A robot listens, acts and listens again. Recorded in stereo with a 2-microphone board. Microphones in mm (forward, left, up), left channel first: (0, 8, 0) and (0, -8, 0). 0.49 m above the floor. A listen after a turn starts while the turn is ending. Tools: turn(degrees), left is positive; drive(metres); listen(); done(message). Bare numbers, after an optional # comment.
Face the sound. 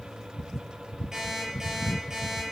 # The alarm clock: about 40° right or 140° right.
turn(-40)
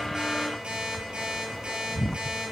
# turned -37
# So it is at 100° right.
turn(-100)
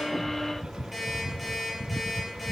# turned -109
# The alarm clock is now 10° left.
turn(10)
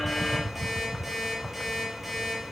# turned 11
done("Facing the alarm clock, over 4 m away.")